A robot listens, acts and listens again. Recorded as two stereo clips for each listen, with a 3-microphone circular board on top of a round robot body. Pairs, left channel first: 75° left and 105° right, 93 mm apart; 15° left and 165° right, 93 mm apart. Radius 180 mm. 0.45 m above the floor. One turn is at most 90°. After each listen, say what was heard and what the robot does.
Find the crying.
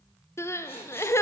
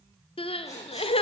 The crying: 15° left. Turn 15° left.
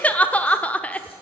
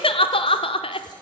Found it: crying, straight ahead, under 1 m away.